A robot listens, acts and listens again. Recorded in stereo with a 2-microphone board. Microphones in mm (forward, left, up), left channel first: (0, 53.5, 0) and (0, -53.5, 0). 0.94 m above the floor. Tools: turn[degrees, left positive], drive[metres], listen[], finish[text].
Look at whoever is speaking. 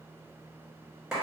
Action: listen[]
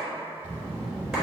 Thought: The child speaking: about 65° left or 115° left.
Action: turn[65]
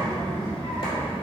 Thought: So it is at 50° left.
Action: turn[50]
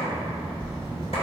Action: finish[Facing the child speaking.]